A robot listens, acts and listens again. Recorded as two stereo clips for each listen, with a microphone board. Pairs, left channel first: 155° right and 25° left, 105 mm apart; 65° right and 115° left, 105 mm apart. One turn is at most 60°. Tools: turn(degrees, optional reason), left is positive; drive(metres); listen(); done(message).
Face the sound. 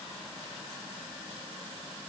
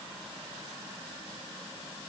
listen()
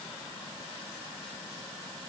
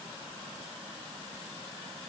listen()
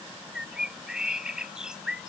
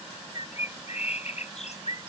turn(degrees=-60, reason="The bird: 60° right.")
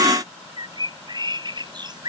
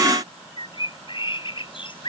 turn(degrees=-25, reason="The bird is now 25° right.")
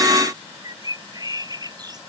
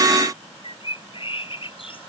turn(degrees=-30, reason="The bird is now 30° right.")
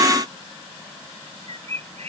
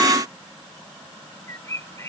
done("Found it: a bird, straight ahead.")